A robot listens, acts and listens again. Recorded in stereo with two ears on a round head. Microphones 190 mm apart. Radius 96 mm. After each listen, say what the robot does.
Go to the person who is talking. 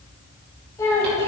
Turn 30° left.
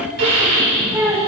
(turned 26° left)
Turn 10° right.
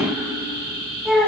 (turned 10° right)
Drive 1.0 m forward.
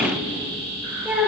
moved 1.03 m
Drive 1.0 m forward.
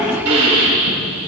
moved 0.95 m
Keep listening.
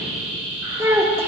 Turn 10° right.
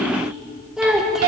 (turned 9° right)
Drive 1.0 m forward.
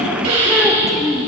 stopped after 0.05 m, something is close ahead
I am next to the child speaking.